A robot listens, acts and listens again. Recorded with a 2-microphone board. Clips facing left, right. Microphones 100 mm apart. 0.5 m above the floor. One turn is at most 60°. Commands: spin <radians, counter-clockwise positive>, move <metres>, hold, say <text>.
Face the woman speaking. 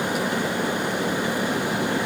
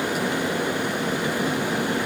hold
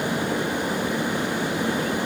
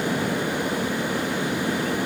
hold
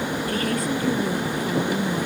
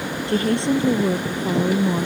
spin -0.52
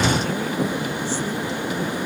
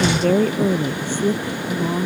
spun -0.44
spin -1.05
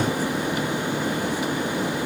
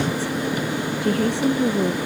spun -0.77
spin -1.05
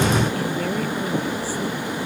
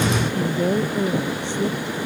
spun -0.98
spin -0.35
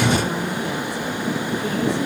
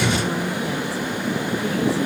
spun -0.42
say Facing the woman speaking.